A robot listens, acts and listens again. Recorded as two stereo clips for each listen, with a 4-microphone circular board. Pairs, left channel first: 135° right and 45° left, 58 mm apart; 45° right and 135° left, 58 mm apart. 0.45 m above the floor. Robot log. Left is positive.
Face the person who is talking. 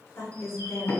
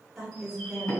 note: The woman speaking: 125° right.
cmd yaw -125
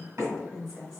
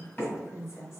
note: The woman speaking is now 35° right.
cmd yaw -35
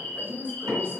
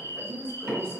end: Found it: a woman speaking, straight ahead.